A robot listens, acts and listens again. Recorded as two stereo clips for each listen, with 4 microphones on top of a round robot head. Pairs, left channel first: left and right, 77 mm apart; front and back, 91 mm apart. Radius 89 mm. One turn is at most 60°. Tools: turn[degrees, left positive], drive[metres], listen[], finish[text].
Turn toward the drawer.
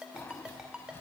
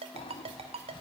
Thought: The drawer: 25° left.
Action: turn[25]
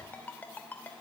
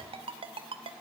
Action: listen[]
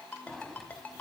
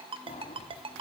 Action: finish[Facing the drawer, 1 to 2 m away.]